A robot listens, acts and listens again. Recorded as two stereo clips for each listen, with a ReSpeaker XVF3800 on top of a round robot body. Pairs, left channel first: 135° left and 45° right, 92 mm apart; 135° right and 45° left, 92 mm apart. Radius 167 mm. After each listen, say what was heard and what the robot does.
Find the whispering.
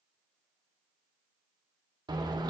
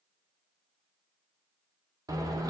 Keep listening.
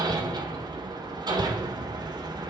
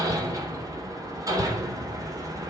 Keep listening.
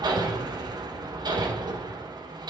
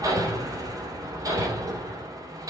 I can't make out whispering, only hammering.